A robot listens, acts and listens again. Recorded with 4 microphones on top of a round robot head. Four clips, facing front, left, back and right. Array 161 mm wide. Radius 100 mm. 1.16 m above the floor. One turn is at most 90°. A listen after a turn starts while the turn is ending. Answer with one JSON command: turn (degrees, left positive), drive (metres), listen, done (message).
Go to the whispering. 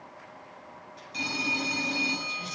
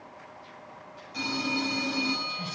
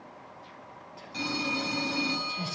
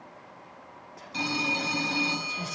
{"turn": -90}
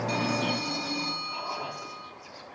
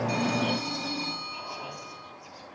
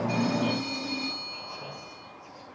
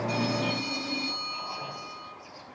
{"turn": 10}
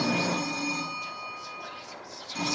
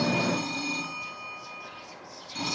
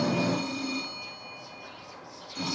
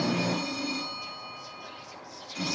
{"drive": 1.0}
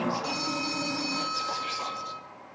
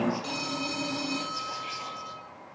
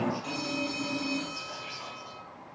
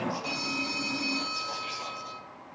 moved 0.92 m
{"drive": 1.0}
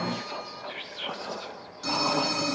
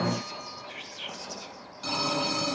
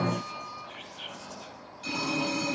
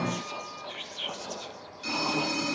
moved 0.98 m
{"turn": -15}
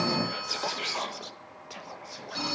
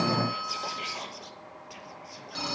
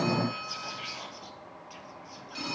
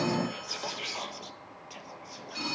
{"drive": 1.0}
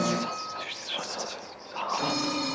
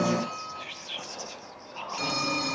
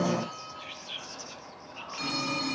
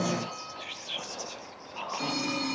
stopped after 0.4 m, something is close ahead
{"done": "I am next to the whispering."}